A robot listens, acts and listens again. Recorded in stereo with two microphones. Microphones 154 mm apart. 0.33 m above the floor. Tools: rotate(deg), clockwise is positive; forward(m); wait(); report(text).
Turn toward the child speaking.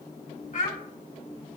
rotate(-55)
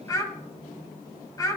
rotate(-25)
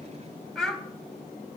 report("Facing the child speaking, 1 to 2 m away.")